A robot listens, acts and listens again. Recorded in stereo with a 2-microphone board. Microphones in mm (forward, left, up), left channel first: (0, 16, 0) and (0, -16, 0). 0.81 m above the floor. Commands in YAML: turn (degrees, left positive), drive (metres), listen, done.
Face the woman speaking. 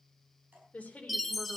turn: 50
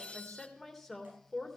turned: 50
done: "Found it: a woman speaking, straight ahead, 2 to 4 m away."